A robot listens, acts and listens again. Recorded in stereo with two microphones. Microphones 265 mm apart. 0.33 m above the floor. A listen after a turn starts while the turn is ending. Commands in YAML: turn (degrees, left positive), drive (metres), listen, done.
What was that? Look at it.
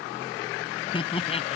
turn: 25
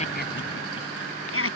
turn: 125
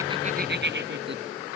turn: -40
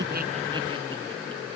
listen: true
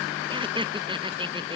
turn: -20
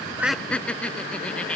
done: "Found it: laughter, straight ahead."